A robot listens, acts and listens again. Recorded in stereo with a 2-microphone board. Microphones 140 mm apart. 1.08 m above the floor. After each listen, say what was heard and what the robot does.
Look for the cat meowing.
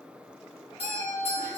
Turn 30° left.
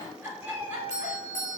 So it is at 15° right. Turn 15° right.
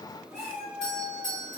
The cat meowing is now 10° left. Turn 10° left.
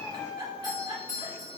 The cat meowing is now 10° left. Turn 10° left.
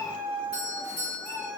The cat meowing is now 10° left. Turn 10° left.
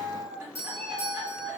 Facing the cat meowing.